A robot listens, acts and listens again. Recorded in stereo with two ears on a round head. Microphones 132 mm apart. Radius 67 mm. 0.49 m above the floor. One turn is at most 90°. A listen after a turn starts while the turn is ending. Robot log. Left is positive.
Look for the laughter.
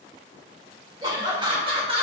note: The laughter: about 35° right or 145° right.
cmd yaw -35
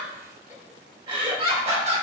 note: The laughter: about 45° right or 135° right.
cmd yaw -45
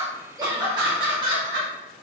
note: The laughter: about 40° right or 140° right.
cmd yaw -40
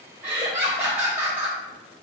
note: So it is at 15° right.
cmd yaw -15
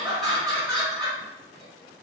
end: Facing the laughter, 1 to 2 m away.